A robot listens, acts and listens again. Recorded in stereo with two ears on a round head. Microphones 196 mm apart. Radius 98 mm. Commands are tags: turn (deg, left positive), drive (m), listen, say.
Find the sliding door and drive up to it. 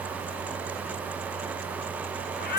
<listen/>
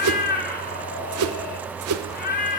<listen/>
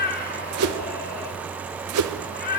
<say>I can't make out a sliding door, only a whoosh and a cat meowing.</say>